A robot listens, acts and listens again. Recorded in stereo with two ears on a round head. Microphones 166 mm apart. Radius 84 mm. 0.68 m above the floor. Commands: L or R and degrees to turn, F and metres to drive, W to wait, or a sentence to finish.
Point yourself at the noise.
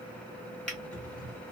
L30
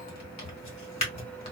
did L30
L145
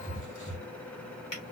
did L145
L30
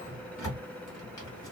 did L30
L15
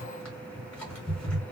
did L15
Found it: a drawer, straight ahead.